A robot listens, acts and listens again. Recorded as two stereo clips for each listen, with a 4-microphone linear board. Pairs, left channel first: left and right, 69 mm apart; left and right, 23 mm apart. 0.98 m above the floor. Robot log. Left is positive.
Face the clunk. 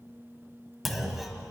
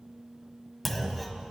cmd yaw +30
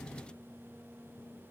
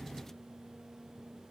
cmd idle
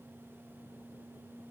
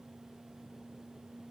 end: I heard a clunk, but can't make it out now. It was about 30° right or 150° left.